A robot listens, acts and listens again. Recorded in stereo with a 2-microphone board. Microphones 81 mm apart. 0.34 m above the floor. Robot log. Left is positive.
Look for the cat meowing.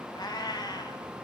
note: The cat meowing: about 55° left or 125° left.
cmd yaw +55
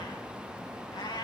note: So it is at 65° left.
cmd yaw +65
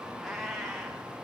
end: Facing the cat meowing.